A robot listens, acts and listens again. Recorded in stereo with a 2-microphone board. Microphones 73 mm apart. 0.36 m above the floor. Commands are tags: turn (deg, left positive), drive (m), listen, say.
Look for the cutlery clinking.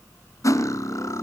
<turn deg="50"/>
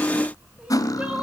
<turn deg="70"/>
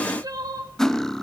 <turn deg="10"/>
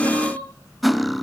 <say>Facing the cutlery clinking, 1 to 2 m away.</say>